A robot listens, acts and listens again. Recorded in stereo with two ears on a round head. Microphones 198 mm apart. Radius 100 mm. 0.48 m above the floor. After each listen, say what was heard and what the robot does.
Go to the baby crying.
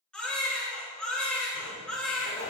Turn 30° left.
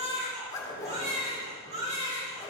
So it is at 30° right. Turn 30° right.
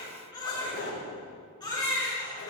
The baby crying is now 20° left. Turn 20° left.
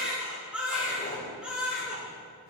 Drive 1.0 m forward.
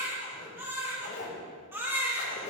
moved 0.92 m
The baby crying is now 10° right. Turn 10° right.
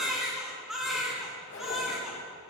Drive 1.0 m forward.
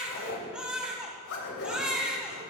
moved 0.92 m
Drive 1.0 m forward.
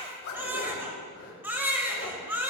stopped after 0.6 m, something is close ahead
The baby crying is now 10° right. Turn 10° right.
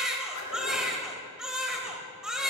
Arrived at the baby crying, straight ahead.